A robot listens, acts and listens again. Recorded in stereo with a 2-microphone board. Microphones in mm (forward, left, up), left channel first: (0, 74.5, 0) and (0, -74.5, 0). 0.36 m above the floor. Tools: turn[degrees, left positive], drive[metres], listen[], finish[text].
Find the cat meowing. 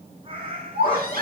Thought: The cat meowing: about 35° right or 145° right.
Action: turn[-35]
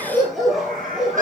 Action: listen[]
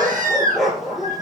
Action: listen[]
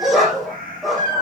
Thought: So it is at 105° right.
Action: turn[-105]
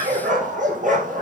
Action: listen[]
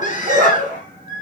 Action: listen[]
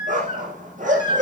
Action: finish[I heard a cat meowing from this way, but can't make it out now.]